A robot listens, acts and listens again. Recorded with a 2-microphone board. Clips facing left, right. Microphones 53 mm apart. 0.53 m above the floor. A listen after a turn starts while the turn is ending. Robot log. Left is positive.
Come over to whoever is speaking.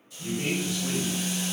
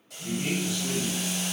note: The man speaking: about 55° left or 125° left.
cmd yaw +55
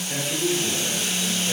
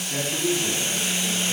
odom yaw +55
note: So it is at 65° left.
cmd yaw +65
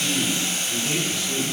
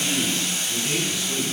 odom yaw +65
cmd fwd 1.0
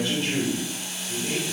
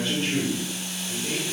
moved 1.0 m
cmd fwd 1.0
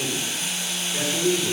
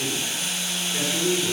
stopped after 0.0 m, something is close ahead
end: Arrived at the man speaking, straight ahead.